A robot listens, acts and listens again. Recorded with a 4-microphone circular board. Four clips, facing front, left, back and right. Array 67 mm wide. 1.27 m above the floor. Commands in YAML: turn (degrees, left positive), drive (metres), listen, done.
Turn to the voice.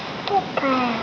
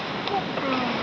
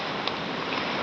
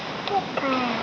turn: -15
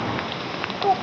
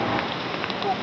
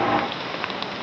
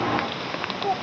done: "Facing the child speaking."